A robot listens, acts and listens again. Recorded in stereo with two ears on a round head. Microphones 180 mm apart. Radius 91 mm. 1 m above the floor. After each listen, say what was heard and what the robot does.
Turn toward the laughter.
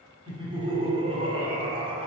The laughter: about 30° right or 150° right. Turn 30° right.
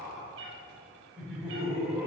Found it: laughter, straight ahead, over 4 m away.